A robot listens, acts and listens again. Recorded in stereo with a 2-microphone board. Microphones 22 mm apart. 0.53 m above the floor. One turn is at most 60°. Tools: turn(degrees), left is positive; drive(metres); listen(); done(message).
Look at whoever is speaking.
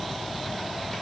listen()
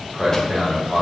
turn(degrees=-35)
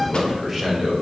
turn(degrees=-15)
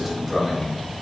done("Facing the man speaking.")